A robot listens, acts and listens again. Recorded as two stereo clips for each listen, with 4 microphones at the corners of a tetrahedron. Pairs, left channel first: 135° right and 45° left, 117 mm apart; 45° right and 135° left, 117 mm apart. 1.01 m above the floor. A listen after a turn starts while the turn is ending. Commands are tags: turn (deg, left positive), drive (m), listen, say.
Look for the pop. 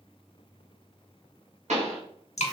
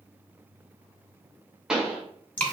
<turn deg="50"/>
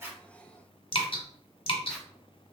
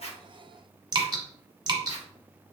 <say>I heard a pop from this way, but can't make it out now.</say>